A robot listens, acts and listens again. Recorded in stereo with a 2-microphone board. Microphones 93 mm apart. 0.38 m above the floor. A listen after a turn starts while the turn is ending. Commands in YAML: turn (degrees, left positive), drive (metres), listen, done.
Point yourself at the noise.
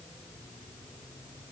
listen: true
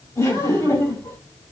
turn: 35
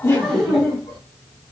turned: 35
done: "Facing the laughter."